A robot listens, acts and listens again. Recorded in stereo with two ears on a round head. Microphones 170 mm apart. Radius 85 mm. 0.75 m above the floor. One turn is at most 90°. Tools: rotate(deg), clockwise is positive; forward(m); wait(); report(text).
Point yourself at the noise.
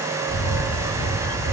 rotate(-40)
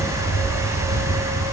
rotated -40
report("Found it: a camera shutter, straight ahead.")